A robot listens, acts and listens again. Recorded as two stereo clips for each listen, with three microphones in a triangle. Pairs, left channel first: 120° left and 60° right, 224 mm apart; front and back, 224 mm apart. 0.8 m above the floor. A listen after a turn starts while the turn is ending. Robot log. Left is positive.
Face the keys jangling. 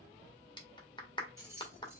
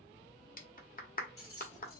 note: The keys jangling: 20° left.
cmd yaw +20
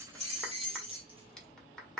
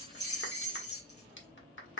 end: Found it: keys jangling, straight ahead.